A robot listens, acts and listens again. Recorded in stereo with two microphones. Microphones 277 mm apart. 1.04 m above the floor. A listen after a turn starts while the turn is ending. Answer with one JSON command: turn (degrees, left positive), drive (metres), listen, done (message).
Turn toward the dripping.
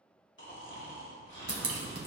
{"turn": -60}
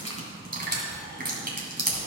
{"turn": -40}
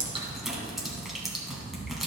{"done": "Facing the dripping, 1 to 2 m away."}